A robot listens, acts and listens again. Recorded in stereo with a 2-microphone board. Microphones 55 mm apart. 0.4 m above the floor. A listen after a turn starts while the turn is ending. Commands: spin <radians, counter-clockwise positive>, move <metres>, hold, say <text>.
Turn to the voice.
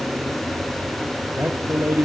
spin -0.44
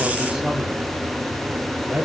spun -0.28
spin -0.17
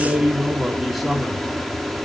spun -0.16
say Found it: a man speaking, straight ahead, 2 to 4 m away.